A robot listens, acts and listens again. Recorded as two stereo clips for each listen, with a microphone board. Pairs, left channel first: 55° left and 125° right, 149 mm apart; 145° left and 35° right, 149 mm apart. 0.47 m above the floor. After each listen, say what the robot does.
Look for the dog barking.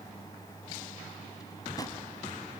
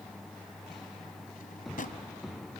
Keep listening.
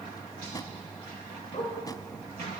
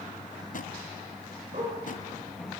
Facing the dog barking, over 4 m away.